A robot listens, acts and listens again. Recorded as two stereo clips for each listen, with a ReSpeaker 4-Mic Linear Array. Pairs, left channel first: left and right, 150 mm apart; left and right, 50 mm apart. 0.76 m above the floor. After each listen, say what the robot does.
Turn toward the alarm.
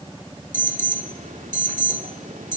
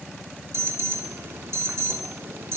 Turn 60° right.
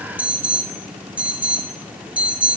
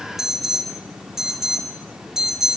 Turn 10° right.
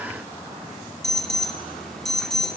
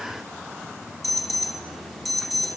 Facing the alarm.